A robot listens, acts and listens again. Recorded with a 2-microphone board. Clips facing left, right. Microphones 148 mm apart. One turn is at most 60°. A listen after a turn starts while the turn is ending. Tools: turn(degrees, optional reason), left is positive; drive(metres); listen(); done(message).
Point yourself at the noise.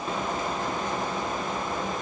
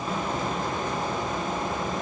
listen()
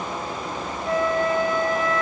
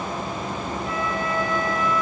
turn(degrees=45, reason="The flute: about 45° left or 135° left.")
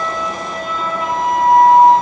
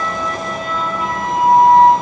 done("Facing the flute.")